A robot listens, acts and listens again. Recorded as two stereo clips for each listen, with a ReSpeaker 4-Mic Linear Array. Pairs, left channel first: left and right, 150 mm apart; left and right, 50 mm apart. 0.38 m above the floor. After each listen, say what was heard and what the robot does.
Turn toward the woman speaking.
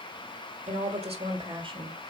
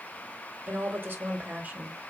The woman speaking: about 30° right or 150° right. Turn 30° right.
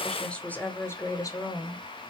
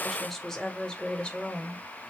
So it is at 30° left. Turn 30° left.
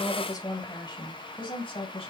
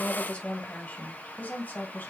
The woman speaking is now 35° left. Turn 35° left.
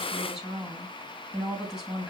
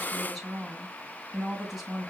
Facing the woman speaking, 2 to 4 m away.